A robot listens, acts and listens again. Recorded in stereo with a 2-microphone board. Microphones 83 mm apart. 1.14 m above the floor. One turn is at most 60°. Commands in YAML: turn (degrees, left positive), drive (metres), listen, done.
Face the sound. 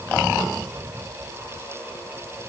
listen: true
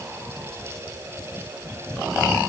listen: true
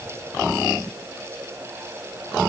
done: "I can't make out anything to turn to."